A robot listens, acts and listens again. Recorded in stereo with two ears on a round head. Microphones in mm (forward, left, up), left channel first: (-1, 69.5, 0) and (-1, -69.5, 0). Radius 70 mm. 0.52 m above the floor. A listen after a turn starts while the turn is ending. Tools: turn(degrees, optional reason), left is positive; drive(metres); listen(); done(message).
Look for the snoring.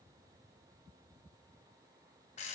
listen()
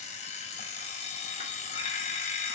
listen()
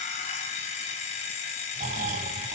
turn(degrees=-50, reason="The snoring: about 50° right or 130° right.")
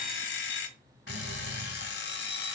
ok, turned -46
turn(degrees=-85, reason="So it is at 85° right.")
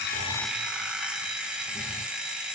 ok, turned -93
listen()
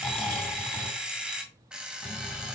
done("Facing the snoring.")